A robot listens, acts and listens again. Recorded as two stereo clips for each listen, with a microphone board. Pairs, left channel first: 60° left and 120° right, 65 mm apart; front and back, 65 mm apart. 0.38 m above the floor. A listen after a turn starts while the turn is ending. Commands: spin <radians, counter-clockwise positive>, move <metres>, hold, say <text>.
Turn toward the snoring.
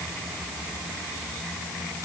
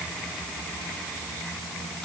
hold
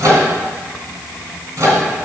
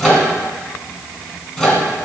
hold
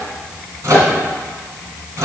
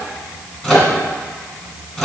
say I can't make out snoring, only a microwave.